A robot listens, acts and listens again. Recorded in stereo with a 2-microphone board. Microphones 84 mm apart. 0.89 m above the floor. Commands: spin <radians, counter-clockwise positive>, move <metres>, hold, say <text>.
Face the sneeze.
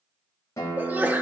spin -0.35
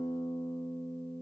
hold
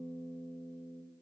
say I heard a sneeze, but can't make it out now. It was about straight ahead or 140° right.